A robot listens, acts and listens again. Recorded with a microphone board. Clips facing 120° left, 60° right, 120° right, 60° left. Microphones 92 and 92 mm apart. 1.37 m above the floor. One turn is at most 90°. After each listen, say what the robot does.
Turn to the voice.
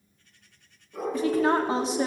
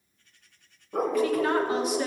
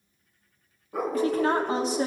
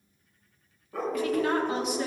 Turn 90° left.
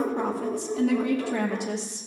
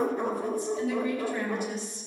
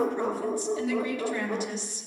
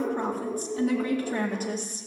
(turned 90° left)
Turn 90° left.
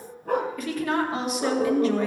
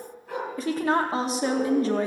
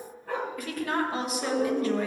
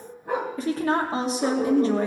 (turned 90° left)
Found it: a woman speaking, straight ahead.